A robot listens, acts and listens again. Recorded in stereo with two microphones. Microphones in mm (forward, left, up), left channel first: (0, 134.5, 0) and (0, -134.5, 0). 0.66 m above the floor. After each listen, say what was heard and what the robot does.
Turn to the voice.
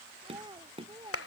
The child speaking: about 15° right or 165° right. Turn 15° right.
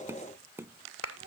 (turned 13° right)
The child speaking: about 30° right or 150° right. Turn 30° right.
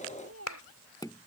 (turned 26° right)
So it is at 125° right. Turn 125° right.
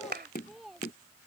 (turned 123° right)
Facing the child speaking.